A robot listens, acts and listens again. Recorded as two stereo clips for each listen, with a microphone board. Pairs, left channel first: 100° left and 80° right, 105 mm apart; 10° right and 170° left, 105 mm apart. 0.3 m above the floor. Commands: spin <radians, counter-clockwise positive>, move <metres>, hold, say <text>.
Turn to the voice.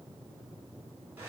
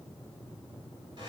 hold
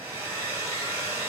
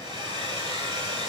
hold
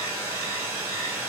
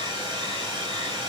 say I can't make out anyone speaking to turn to.